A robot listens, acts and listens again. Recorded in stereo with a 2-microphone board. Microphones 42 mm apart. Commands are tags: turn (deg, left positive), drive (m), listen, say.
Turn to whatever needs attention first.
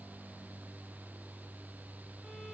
<listen/>
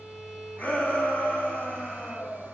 <turn deg="35"/>
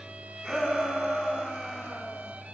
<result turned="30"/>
<turn deg="10"/>
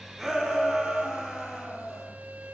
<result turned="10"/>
<say>Facing the shout.</say>